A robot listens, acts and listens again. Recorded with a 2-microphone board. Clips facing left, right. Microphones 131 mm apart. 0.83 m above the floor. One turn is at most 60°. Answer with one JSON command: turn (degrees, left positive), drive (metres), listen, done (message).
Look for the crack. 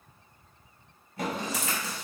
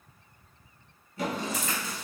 {"turn": 60}
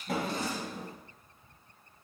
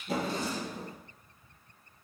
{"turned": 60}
{"listen": true}
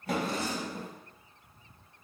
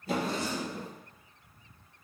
{"done": "I heard a crack, but can't make it out now. It was about 10° left or 50° left."}